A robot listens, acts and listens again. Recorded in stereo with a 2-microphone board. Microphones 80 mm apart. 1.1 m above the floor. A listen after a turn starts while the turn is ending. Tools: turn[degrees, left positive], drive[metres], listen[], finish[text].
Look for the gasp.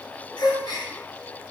Thought: The gasp: about 50° left or 130° left.
Action: turn[50]
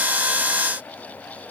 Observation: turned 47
Action: listen[]
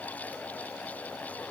Action: finish[I heard a gasp, but can't make it out now. It was about 5° left or 85° left.]